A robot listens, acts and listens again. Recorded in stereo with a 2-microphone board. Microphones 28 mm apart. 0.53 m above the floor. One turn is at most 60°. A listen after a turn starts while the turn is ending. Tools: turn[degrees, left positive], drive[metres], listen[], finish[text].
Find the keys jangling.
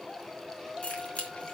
Thought: The keys jangling: about 45° left or 135° left.
Action: turn[45]
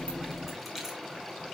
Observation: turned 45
Action: listen[]
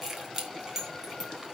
Thought: So it is at 20° right.
Action: turn[-20]
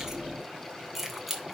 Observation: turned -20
Action: finish[Facing the keys jangling.]